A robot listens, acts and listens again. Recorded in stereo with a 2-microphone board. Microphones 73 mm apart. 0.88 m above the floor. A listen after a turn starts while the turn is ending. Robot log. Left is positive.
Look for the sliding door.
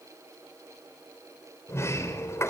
note: The sliding door: about 40° left or 140° left.
cmd yaw +40
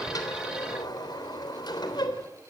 note: So it is at 100° left.
cmd yaw +100
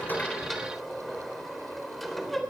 end: Facing the sliding door.